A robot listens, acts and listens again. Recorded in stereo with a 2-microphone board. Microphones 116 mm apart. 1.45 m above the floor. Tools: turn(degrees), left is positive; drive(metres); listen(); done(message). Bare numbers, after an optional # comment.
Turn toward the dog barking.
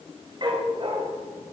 # The dog barking: about 45° right or 135° right.
turn(-45)
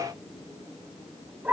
# So it is at 15° right.
turn(-15)
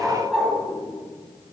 done("Facing the dog barking.")